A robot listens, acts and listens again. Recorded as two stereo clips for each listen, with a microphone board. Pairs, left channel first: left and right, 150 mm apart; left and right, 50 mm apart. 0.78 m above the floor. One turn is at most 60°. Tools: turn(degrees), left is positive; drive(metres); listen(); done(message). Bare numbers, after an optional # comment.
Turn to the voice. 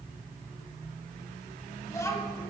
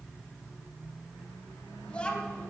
# The child speaking: about 25° left or 155° left.
turn(25)
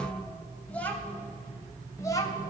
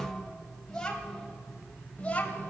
# The child speaking: about 25° left or 155° left.
turn(25)
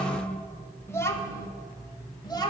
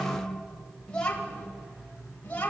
# The child speaking: about 25° left or 155° left.
turn(25)
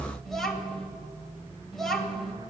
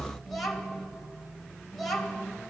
done("Facing the child speaking.")